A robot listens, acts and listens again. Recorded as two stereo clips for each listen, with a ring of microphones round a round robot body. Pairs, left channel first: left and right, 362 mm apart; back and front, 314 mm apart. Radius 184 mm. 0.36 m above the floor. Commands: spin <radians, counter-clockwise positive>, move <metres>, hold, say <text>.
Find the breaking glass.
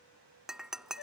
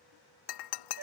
spin 3.14
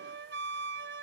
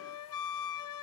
say Facing where the breaking glass came from. I can't hear it now.